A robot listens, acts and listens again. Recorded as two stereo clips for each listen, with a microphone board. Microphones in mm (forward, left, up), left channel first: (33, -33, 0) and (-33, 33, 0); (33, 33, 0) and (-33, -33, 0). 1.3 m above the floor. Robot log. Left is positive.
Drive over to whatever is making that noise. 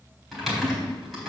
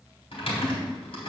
note: The typing on a keyboard: 45° left.
cmd yaw +45
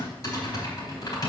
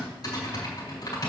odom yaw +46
cmd fwd 1.0
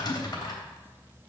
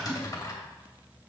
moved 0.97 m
cmd fwd 1.0
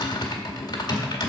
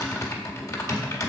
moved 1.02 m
cmd fwd 1.0
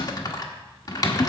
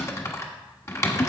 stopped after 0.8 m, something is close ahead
note: The typing on a keyboard is now 10° right.
cmd yaw -10
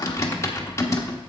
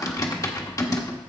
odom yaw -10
end: Arrived at the typing on a keyboard, straight ahead.